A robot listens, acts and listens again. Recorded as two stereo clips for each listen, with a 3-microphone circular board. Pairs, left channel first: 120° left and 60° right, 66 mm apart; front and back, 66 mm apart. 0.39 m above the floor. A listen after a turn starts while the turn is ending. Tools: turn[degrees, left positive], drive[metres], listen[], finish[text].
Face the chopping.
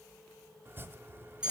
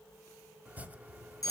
Thought: The chopping: 115° right.
Action: turn[-115]
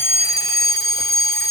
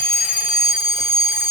Action: listen[]
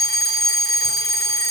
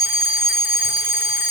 Action: listen[]
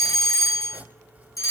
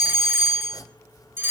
Action: finish[Facing the chopping.]